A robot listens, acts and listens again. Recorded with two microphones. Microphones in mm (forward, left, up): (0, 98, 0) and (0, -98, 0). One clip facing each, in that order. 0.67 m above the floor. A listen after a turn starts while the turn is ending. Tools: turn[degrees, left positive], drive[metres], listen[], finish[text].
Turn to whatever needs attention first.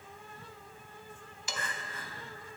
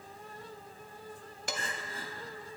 Thought: The crying: about 35° right or 145° right.
Action: turn[-35]
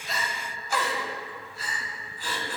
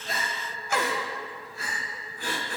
Thought: So it is at 105° right.
Action: turn[-105]
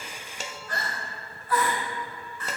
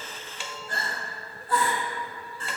Thought: The crying is now 35° right.
Action: turn[-35]
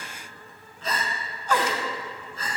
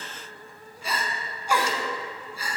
Thought: The crying is now 10° right.
Action: turn[-10]
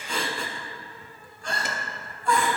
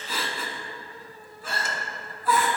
Action: finish[Found it: crying, straight ahead, 1 to 2 m away.]